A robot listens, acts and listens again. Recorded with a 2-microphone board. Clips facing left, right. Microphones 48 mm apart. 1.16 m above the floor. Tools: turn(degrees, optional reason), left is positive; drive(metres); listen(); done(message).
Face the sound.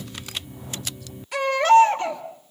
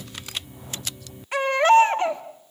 turn(degrees=-30, reason="The baby crying: about 30° right or 150° right.")
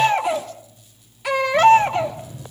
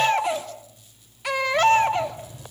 done("Facing the baby crying, 2 to 4 m away.")